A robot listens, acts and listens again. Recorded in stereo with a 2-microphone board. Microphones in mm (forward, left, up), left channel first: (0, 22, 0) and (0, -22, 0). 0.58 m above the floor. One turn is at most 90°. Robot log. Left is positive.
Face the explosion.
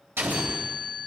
note: The explosion: about 65° right or 115° right.
cmd yaw -65
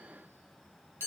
cmd idle
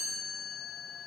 end: I heard an explosion, but can't make it out now. It was about straight ahead or 50° right.